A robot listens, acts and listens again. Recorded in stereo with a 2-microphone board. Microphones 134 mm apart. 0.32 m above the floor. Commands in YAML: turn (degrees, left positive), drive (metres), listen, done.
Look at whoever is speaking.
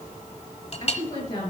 turn: 30
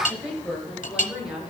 done: "Facing the woman speaking, over 4 m away."